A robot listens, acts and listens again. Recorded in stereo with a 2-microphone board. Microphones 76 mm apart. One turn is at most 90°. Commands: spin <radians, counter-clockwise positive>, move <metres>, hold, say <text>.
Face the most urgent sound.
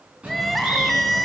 spin 0.52
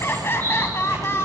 spin 1.57
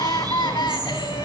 spin 1.48
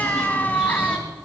spin 0.44
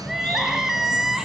say Found it: crying, straight ahead, 1 to 2 m away.